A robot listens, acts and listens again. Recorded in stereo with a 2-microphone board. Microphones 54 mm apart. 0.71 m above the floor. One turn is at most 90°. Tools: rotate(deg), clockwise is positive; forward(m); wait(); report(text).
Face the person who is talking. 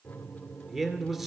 rotate(30)
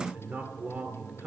rotate(90)
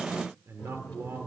rotate(65)
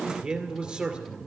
rotate(15)
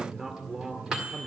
report("Facing the man speaking, 2 to 4 m away.")